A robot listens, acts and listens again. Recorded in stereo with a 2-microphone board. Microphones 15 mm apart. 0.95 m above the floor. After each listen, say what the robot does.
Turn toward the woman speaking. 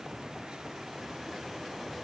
Keep listening.
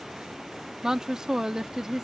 Turn 45° right.
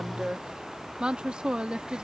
Turn 90° right.
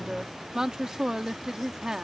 Turn 35° right.
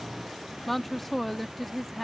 Turn 15° left.
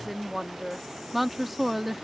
Facing the woman speaking.